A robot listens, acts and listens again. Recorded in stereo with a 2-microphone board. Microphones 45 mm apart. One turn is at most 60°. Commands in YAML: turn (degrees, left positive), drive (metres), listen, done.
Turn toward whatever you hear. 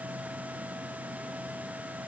listen: true
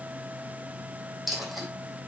turn: 30
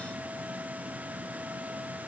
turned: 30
listen: true
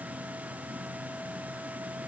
done: "I heard a dropped coin, but can't make it out now. It was about 30° right or 150° left."